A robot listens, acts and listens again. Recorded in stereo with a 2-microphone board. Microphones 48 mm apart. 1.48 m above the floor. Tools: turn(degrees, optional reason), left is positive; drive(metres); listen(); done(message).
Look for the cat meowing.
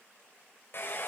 listen()
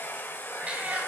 turn(degrees=-30, reason="The cat meowing: about 30° right or 150° right.")
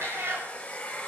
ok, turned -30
turn(degrees=-120, reason="So it is at 120° right.")
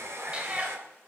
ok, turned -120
turn(degrees=-25, reason="The cat meowing is now 25° right.")
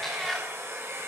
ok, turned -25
done("Found it: a cat meowing, straight ahead, 2 to 4 m away.")